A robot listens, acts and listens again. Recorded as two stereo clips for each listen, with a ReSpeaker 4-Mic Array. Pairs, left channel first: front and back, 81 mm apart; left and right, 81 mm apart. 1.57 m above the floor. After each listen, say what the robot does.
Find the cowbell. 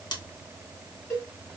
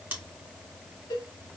Turn 60° left.
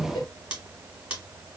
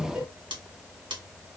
Keep listening.
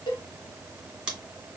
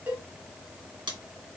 Turn 25° right.
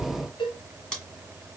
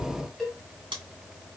Found it: a cowbell, straight ahead, 1 to 2 m away.